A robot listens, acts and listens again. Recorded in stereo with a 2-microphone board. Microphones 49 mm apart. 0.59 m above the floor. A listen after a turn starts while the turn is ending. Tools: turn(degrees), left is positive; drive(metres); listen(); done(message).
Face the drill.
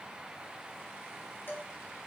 listen()
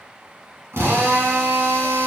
turn(degrees=-75)
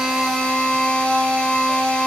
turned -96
turn(degrees=20)
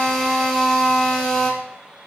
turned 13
turn(degrees=10)
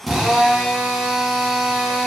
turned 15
done("Found it: a drill, straight ahead, 2 to 4 m away.")